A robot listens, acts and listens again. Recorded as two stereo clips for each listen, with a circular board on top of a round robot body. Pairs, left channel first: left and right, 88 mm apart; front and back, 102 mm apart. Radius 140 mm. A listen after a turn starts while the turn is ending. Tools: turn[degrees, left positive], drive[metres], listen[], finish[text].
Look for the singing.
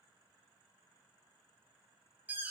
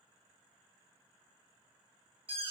Action: listen[]
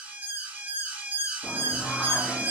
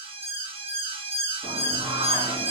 Thought: The singing: 165° left.
Action: turn[165]
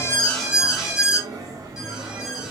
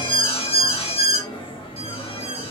Thought: The singing is now 40° right.
Action: turn[-40]
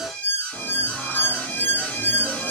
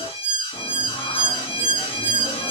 Thought: The singing is now 15° right.
Action: turn[-15]
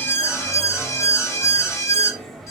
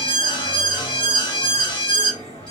Action: finish[Facing the singing, 1 to 2 m away.]